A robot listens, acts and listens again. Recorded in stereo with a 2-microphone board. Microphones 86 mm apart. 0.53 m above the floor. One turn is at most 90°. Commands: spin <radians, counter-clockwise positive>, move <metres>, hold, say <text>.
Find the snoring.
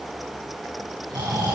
spin -1.05
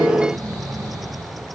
spin -0.96
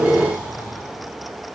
spin -0.44
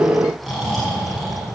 say Facing the snoring.